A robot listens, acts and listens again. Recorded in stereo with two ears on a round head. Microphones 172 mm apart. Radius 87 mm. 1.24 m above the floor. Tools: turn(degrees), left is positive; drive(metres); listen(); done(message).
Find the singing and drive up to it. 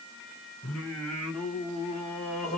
turn(degrees=30)
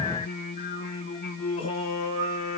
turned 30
turn(degrees=145)
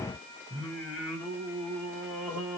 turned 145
turn(degrees=10)
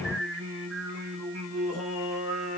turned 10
drive(metres=1.0)
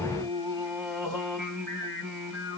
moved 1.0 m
drive(metres=1.0)
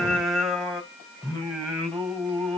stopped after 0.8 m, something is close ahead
done("I am next to the singing.")